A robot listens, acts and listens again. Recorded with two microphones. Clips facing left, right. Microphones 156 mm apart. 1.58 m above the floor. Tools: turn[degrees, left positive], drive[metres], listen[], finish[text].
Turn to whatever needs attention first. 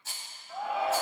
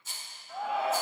Action: turn[30]
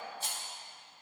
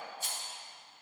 Action: listen[]
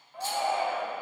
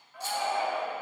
Thought: So it is at 150° left.
Action: turn[150]
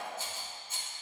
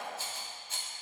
Action: listen[]
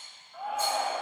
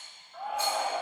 Action: finish[Found it: a shout, straight ahead.]